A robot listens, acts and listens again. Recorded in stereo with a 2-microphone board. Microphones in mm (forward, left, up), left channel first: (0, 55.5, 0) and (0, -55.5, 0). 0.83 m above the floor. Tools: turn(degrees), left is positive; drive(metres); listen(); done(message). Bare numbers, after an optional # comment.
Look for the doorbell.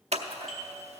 turn(30)
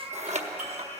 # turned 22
listen()
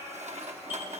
listen()
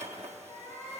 done("I heard a doorbell, but can't make it out now. It was about 20° right or 155° left.")